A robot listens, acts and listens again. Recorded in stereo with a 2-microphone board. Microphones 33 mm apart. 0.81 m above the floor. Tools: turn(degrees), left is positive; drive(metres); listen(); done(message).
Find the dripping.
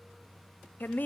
listen()
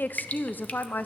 turn(degrees=40)
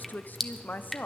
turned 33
turn(degrees=10)
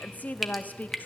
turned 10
done("Facing the dripping, under 1 m away.")